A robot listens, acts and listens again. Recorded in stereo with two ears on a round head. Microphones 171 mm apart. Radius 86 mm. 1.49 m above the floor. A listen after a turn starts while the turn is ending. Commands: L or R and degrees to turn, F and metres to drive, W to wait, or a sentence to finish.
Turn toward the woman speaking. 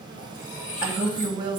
R20
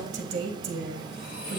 R140
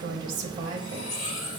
R50
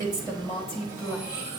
Facing the woman speaking.